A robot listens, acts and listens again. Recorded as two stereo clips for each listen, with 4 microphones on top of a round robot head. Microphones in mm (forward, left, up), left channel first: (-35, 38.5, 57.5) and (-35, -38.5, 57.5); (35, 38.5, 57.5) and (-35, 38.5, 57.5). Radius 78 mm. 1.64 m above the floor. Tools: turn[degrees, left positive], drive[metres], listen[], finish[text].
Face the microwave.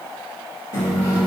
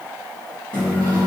Thought: The microwave: 75° left.
Action: turn[75]
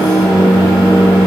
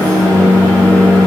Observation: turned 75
Action: finish[Found it: a microwave, straight ahead, 1 to 2 m away.]